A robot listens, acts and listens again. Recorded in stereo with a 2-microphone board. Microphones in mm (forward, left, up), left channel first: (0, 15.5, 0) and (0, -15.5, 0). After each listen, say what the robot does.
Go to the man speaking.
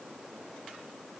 Keep listening.
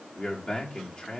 Turn 30° left.
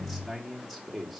Drive 1.0 m forward.
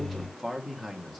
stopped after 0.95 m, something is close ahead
I am next to the man speaking.